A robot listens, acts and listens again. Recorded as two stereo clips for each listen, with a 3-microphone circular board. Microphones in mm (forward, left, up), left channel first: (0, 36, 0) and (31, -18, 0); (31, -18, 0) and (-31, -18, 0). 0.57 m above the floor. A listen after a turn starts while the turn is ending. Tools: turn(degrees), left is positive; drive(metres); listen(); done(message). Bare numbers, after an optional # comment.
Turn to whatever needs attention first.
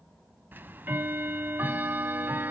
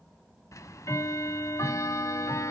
listen()
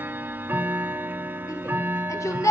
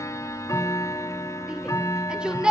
# The shout: 105° left.
turn(105)
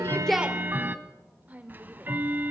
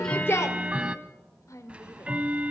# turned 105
done("Found it: a shout, straight ahead, 1 to 2 m away.")